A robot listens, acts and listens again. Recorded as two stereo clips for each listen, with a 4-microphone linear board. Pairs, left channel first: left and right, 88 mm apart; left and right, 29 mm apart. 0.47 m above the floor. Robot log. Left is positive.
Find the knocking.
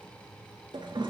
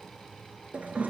cmd idle
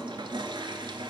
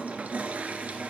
cmd idle
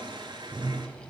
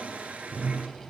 end: I can't make out knocking to turn to.